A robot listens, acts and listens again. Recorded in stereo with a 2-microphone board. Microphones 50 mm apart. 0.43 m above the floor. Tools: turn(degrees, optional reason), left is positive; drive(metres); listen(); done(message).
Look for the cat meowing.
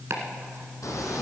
turn(degrees=90)
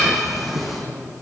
done("Facing the cat meowing, 2 to 4 m away.")